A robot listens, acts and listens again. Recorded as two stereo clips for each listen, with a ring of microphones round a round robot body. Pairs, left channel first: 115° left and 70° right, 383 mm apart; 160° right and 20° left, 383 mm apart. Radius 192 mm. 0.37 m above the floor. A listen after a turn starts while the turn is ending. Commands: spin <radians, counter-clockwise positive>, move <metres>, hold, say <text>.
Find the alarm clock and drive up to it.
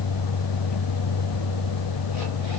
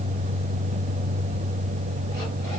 hold
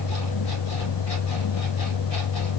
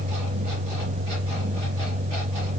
hold
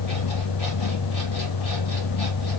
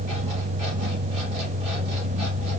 say I can't make out an alarm clock.